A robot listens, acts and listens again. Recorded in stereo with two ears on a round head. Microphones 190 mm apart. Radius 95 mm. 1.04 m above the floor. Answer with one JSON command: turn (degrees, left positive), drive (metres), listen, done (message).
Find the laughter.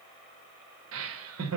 {"turn": -75}
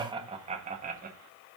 {"turn": -40}
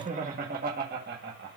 {"turn": -55}
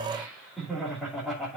{"done": "Facing the laughter, 2 to 4 m away."}